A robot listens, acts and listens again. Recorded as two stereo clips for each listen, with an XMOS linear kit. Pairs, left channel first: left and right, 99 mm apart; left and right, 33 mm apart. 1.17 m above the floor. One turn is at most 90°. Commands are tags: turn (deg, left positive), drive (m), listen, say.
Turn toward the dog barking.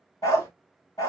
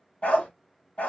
<turn deg="35"/>
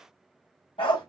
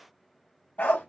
<turn deg="90"/>
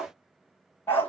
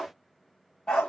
<turn deg="25"/>
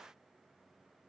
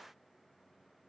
<listen/>
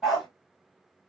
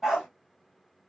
<say>Facing the dog barking.</say>